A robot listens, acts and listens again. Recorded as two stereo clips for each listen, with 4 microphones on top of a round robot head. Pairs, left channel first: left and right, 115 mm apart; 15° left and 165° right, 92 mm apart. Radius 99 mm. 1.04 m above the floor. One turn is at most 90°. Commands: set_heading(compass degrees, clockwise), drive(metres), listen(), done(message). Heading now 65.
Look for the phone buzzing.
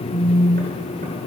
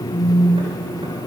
set_heading(5)
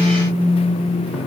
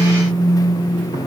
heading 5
done("Found it: a phone buzzing, straight ahead, 1 to 2 m away.")